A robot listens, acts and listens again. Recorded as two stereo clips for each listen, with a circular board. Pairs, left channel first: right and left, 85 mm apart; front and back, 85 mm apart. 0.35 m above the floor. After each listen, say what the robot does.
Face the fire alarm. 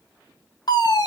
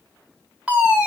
Turn 105° right.
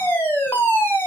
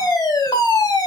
Turn 30° right.
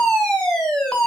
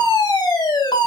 Turn 10° right.
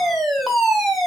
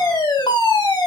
Found it: a fire alarm, straight ahead.